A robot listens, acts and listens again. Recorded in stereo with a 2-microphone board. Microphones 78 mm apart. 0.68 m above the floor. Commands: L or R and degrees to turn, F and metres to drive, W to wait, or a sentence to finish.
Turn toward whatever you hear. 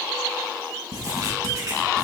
R50
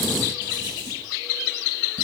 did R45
R85
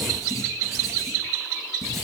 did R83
Found it: writing, straight ahead, 2 to 4 m away.